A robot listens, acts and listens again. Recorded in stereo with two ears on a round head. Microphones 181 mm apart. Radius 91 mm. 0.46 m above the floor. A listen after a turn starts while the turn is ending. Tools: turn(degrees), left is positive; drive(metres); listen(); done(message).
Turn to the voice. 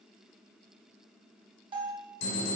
listen()
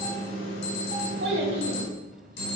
turn(degrees=-55)
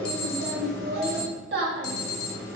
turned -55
turn(degrees=-60)
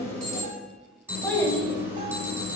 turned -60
done("Facing the child speaking, 1 to 2 m away.")